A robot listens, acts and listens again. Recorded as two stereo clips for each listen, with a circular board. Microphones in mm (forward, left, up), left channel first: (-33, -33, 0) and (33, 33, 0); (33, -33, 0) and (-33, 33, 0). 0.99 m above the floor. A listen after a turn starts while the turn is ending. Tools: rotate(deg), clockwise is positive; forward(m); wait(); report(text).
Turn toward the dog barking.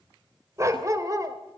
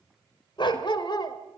report("Found it: a dog barking, straight ahead.")